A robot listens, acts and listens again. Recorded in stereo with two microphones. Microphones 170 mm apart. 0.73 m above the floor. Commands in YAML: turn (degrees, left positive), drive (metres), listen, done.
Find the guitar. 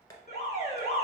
listen: true
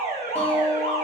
turn: 30
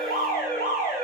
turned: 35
listen: true
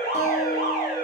turn: 130
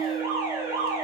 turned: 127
done: "Facing the guitar."